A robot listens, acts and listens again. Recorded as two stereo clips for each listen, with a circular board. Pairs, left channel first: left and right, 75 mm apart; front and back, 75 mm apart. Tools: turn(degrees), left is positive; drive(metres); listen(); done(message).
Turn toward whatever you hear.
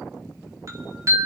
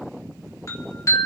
turn(degrees=-50)
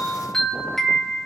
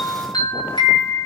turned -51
done("Found it: a chime, straight ahead.")